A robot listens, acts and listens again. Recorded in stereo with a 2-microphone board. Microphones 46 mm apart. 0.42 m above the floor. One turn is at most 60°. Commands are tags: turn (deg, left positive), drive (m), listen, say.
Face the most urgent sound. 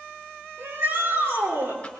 <turn deg="-60"/>
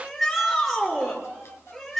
<say>Found it: a shout, straight ahead, over 4 m away.</say>